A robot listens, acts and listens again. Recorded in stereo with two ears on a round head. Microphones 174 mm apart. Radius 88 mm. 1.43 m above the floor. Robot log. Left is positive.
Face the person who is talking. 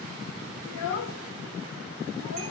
note: The child speaking: about 75° left or 105° left.
cmd yaw +75
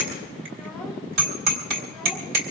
cmd idle
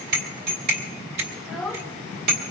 end: Facing the child speaking.